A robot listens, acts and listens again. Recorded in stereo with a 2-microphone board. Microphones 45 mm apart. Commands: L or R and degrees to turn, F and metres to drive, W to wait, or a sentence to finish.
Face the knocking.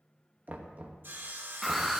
R35
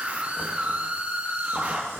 W
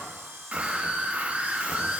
W
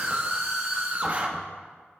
I heard knocking, but can't make it out now. It was about straight ahead or 110° right.